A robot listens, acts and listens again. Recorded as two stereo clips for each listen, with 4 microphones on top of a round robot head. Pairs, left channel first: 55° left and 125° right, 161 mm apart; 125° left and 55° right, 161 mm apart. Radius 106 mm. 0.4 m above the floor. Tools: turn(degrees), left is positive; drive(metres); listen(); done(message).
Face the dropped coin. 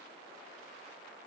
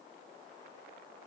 listen()
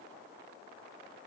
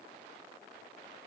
listen()
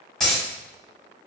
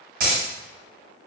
turn(degrees=-30)
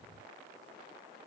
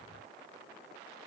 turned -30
done("Facing where the dropped coin came from. I can't hear it now.")